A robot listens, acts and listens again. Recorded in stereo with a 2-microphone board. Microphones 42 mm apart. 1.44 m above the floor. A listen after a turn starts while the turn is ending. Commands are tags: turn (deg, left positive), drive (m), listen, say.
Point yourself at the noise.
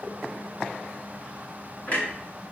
<turn deg="50"/>
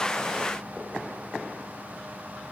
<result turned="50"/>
<listen/>
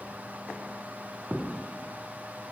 <say>I heard a clunk, but can't make it out now. It was about straight ahead or 80° left.</say>